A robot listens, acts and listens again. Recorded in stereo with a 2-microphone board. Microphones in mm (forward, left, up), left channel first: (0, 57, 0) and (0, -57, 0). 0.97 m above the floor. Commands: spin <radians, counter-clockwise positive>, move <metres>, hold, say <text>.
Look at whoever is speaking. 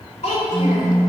spin 1.57
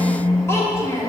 spin 0.52
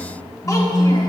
hold
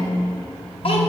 spin 0.96
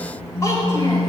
spin 0.52
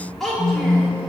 say Found it: a child speaking, straight ahead, 1 to 2 m away.